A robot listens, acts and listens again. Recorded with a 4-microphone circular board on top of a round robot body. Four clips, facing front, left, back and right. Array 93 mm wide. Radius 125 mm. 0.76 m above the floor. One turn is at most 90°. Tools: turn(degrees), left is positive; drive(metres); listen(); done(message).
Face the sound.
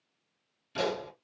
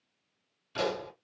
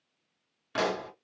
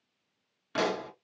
turn(degrees=-90)
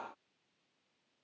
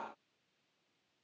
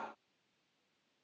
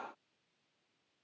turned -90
turn(degrees=-45)
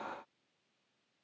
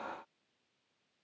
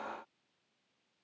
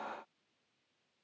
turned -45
done("I heard a pop from this way, but can't make it out now.")